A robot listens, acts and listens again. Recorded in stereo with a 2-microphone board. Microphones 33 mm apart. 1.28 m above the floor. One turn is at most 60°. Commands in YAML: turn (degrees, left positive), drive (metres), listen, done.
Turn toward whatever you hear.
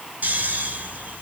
turn: -60
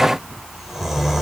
turn: -10
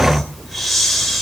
done: "Facing the snoring, 2 to 4 m away."